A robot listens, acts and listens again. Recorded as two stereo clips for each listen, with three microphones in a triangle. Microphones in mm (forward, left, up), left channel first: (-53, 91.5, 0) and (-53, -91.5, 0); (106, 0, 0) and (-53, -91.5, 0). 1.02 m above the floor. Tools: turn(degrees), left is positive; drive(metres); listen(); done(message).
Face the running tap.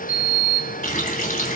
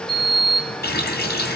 turn(degrees=50)
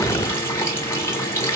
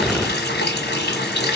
turn(degrees=15)
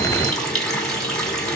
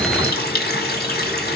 done("Facing the running tap.")